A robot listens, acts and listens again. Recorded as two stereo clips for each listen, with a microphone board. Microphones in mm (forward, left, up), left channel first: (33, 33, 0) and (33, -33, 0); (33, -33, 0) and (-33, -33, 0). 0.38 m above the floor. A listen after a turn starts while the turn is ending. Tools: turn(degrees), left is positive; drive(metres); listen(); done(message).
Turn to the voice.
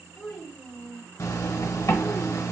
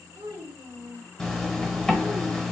turn(degrees=-175)
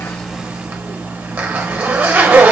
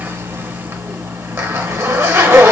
listen()
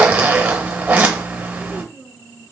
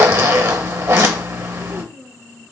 turn(degrees=40)
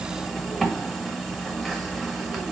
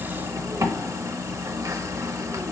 listen()
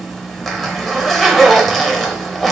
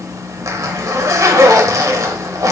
listen()
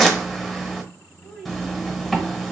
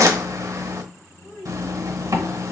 done("Facing the child speaking.")